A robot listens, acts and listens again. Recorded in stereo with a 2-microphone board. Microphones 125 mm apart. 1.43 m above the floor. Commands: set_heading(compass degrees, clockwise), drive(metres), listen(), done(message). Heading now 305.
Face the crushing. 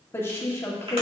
listen()
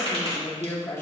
listen()
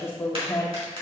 done("I can't make out crushing to turn to.")